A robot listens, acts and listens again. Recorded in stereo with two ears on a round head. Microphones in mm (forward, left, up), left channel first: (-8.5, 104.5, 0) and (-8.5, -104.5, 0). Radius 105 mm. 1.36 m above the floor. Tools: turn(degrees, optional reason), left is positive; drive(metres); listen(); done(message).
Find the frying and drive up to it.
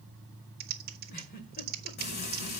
turn(degrees=40, reason="The frying: about 40° left or 140° left.")
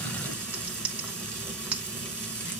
drive(metres=1.0)
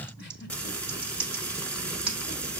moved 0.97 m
drive(metres=1.0)
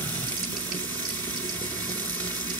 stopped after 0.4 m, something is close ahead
turn(degrees=10, reason="The frying is now 10° left.")
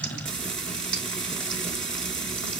done("Arrived at the frying, straight ahead.")